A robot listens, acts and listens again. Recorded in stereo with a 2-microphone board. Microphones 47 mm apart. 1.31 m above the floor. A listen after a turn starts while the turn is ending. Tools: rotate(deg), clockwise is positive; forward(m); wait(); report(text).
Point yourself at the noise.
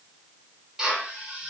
rotate(30)
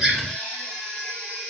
wait()
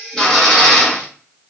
rotate(-15)
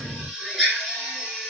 report("Facing the drill, 1 to 2 m away.")